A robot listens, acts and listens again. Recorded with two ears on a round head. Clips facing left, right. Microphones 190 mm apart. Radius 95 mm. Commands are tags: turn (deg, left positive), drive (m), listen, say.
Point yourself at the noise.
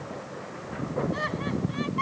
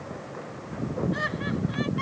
<turn deg="-15"/>
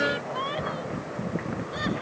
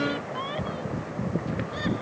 <turn deg="30"/>
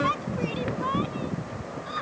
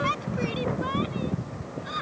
<turn deg="-25"/>
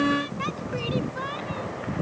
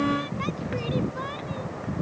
<say>Facing the laughter.</say>